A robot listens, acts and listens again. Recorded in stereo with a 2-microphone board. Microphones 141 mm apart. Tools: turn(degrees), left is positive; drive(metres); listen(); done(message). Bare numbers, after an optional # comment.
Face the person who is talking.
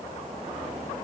listen()
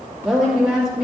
turn(-30)
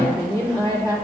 # So it is at 25° left.
turn(25)
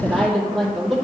done("Facing the woman speaking, 2 to 4 m away.")